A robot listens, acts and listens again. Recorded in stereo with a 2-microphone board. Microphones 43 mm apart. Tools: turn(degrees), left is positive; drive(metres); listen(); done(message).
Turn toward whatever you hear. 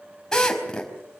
turn(degrees=15)
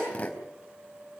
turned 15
turn(degrees=150)
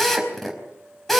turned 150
done("Found it: a drill, straight ahead.")